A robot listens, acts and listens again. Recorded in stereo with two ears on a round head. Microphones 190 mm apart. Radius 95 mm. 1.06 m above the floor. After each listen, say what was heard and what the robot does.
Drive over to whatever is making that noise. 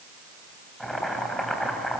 Turn 30° left.
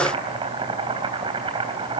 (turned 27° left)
So it is at 25° right. Turn 25° right.
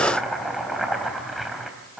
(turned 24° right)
Drive 1.0 m forward.
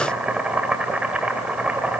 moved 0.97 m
Drive 1.0 m forward.
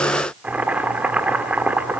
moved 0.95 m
Drive 1.0 m forward.
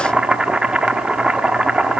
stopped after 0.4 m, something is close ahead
Arrived at the boiling, straight ahead.